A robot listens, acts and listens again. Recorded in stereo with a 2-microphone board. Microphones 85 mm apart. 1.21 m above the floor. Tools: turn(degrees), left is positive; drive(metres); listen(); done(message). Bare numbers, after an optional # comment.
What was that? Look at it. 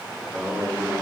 # The singing: about 25° right or 155° right.
turn(-25)
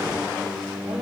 # So it is at 115° right.
turn(-115)
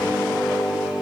done("Facing the singing, 2 to 4 m away.")